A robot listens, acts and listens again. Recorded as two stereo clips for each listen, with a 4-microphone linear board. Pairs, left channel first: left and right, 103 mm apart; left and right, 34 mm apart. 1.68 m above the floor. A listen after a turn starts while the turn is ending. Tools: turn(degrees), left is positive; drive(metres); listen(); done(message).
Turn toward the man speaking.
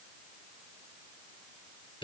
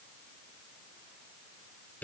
listen()
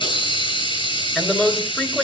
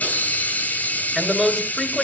turn(degrees=30)
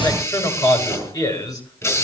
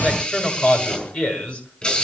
turn(degrees=145)
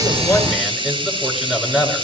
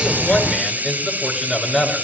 done("Facing the man speaking, over 4 m away.")